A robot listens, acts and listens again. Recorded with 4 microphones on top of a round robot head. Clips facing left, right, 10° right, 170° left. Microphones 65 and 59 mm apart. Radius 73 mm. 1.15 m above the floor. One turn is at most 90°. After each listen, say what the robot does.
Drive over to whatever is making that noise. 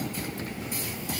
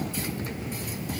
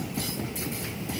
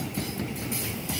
Keep listening.
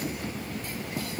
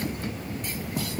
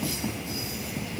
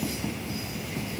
Keep listening.
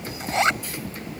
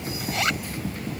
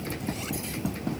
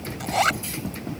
Turn 90° left.
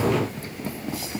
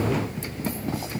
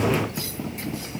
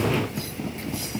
Turn 60° left.
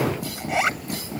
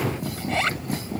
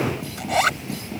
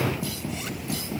Turn 15° left.
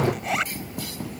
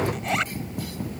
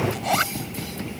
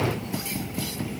Drive 1.0 m forward.
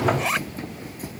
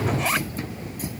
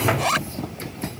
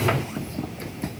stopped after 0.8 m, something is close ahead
Blocked. The zipper is further on, straight ahead.